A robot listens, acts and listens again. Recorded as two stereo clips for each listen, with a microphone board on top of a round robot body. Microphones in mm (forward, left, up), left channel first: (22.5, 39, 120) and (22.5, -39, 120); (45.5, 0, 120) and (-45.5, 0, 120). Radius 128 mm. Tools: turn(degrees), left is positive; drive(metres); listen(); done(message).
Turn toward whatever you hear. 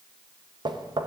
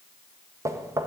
turn(degrees=-120)
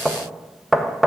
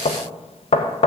done("Found it: knocking, straight ahead, 1 to 2 m away.")